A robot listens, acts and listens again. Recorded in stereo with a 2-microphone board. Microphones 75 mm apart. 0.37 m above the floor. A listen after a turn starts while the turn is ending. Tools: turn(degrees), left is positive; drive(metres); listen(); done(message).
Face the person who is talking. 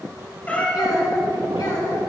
turn(degrees=65)
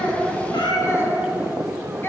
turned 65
turn(degrees=30)
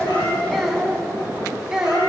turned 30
turn(degrees=-10)
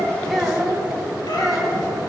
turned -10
done("Found it: a child speaking, straight ahead.")